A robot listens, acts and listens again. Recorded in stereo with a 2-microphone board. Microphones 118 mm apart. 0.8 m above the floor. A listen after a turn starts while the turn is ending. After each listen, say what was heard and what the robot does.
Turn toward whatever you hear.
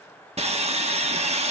The sawing: about 60° right or 120° right. Turn 60° right.
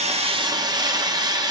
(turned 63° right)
So it is at 40° right. Turn 40° right.
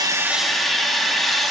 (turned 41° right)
Facing the sawing, 1 to 2 m away.